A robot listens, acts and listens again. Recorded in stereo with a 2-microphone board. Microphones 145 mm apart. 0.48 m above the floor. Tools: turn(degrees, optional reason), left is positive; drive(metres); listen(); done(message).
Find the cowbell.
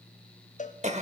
turn(degrees=55, reason="The cowbell: about 55° left or 125° left.")
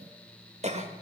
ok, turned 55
listen()
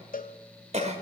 turn(degrees=70, reason="So it is at 70° left.")
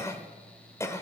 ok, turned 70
listen()
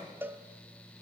turn(degrees=-15, reason="The cowbell is now 15° right.")
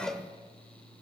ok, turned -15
done("Facing the cowbell.")